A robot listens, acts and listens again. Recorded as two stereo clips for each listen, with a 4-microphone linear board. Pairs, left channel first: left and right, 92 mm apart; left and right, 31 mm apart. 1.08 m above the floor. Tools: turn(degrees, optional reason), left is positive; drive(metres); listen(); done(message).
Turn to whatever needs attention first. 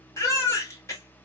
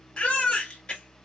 turn(degrees=35, reason="The baby crying: about 35° left or 145° left.")
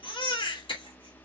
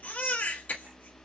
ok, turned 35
turn(degrees=110, reason="So it is at 110° left.")
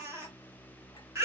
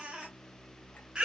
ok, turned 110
turn(degrees=-30, reason="The baby crying is now 30° right.")
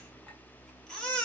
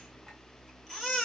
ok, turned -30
turn(degrees=10, reason="The baby crying is now 10° left.")
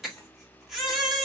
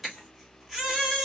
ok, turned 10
done("Found it: a baby crying, straight ahead, 1 to 2 m away.")